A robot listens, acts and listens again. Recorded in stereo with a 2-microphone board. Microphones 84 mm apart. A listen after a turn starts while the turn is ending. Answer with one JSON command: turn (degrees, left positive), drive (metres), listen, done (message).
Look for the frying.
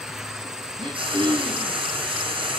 {"turn": -90}
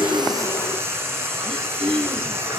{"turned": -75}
{"turn": -30}
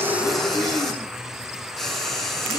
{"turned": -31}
{"done": "Found it: frying, straight ahead, over 4 m away."}